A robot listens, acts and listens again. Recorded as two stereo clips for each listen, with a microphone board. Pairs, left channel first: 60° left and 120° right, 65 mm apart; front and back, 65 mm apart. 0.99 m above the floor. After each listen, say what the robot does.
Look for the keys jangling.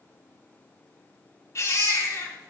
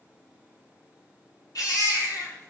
Keep listening.
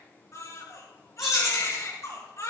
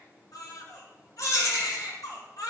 Turn 40° right.
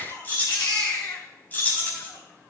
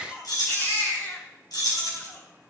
Facing the keys jangling, over 4 m away.